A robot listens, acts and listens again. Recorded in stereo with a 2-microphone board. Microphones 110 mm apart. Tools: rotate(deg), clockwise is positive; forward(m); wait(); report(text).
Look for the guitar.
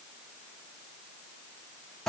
wait()
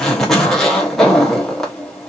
wait()
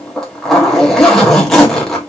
report("I can't make out a guitar, only a zipper.")